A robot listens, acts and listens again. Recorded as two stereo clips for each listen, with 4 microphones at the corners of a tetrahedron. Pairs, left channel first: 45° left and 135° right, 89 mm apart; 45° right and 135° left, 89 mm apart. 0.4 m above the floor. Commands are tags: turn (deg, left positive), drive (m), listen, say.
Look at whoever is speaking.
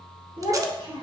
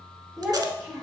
<turn deg="-130"/>
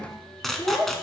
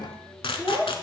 <turn deg="25"/>
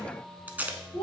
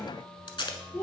<turn deg="15"/>
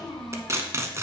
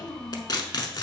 <turn deg="10"/>
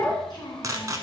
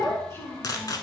<turn deg="15"/>
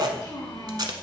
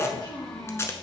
<say>Facing the child speaking, 2 to 4 m away.</say>